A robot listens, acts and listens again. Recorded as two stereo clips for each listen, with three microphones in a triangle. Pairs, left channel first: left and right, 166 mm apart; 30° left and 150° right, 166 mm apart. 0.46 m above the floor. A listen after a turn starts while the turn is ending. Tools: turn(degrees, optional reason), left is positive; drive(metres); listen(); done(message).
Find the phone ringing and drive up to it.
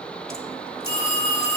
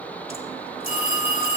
turn(degrees=-70, reason="The phone ringing: 70° right.")
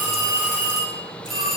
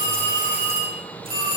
drive(metres=1.0)
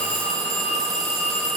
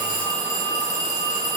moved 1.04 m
drive(metres=1.0)
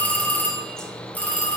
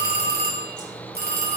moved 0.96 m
turn(degrees=10, reason="The phone ringing is now 10° left.")
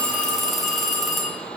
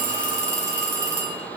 drive(metres=1.0)
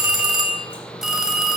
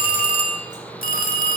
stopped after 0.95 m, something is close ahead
done("I am next to the phone ringing.")